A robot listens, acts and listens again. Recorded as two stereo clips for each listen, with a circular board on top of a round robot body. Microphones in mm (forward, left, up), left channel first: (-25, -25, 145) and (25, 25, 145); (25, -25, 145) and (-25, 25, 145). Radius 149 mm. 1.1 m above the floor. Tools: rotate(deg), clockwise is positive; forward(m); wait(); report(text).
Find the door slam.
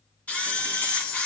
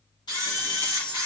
wait()
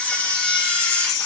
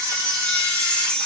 wait()
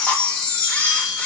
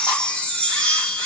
report("I can't make out a door slam to turn to.")